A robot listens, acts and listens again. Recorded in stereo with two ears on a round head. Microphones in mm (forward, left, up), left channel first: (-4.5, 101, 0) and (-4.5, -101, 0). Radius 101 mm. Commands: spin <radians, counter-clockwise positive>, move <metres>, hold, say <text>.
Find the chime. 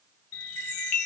spin 1.13
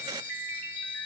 say Found it: a chime, straight ahead.